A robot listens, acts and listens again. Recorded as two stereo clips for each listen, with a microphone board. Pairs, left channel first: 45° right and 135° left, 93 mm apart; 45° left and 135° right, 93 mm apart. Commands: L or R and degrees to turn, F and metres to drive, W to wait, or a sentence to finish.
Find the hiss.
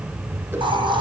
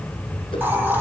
L155
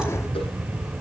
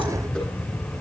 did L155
W
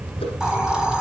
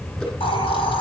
L55
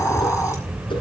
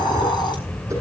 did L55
L10
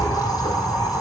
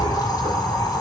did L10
Facing the hiss, over 4 m away.